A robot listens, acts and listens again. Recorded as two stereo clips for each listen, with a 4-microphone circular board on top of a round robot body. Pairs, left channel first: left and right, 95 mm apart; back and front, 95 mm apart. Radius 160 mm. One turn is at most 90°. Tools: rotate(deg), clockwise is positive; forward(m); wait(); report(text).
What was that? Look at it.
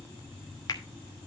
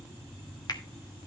rotate(-90)
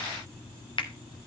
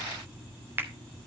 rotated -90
rotate(-65)
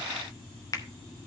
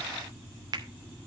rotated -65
rotate(-40)
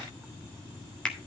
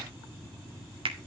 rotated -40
rotate(-10)
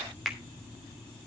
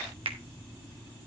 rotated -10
report("Facing the finger snap.")